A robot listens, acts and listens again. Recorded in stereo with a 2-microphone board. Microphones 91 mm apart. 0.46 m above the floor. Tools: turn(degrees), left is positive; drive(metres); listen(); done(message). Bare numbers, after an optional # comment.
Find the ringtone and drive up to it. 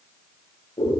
listen()
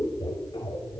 listen()
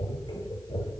done("I can't make out a ringtone to turn to.")